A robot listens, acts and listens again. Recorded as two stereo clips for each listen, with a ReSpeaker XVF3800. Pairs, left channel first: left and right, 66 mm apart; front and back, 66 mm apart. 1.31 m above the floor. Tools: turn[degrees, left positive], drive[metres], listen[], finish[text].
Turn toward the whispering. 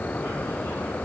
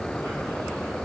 Action: listen[]
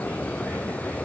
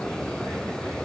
Action: listen[]
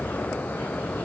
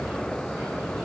Action: finish[I can't make out whispering to turn to.]